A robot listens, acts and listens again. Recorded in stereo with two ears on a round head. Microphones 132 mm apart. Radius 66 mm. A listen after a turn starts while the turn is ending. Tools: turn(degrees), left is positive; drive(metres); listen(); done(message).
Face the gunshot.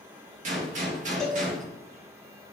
turn(degrees=-55)
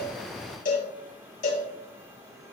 listen()
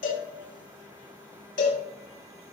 done("I heard a gunshot, but can't make it out now. It was about straight ahead or 70° right.")